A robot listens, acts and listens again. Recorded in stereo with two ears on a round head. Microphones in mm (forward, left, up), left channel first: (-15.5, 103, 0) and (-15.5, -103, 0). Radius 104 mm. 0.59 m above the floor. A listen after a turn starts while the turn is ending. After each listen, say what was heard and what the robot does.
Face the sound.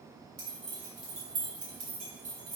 The keys jangling: about 60° right or 120° right. Turn 60° right.
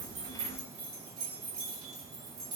So it is at 70° right. Turn 70° right.
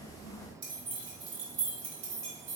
The keys jangling is now 25° right. Turn 25° right.
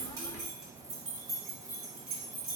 Found it: keys jangling, straight ahead, 2 to 4 m away.